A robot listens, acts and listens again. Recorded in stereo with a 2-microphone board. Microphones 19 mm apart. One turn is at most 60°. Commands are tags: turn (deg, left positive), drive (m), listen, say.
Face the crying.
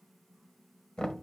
<listen/>
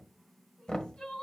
<turn deg="55"/>
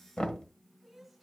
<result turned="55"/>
<say>Found it: crying, straight ahead.</say>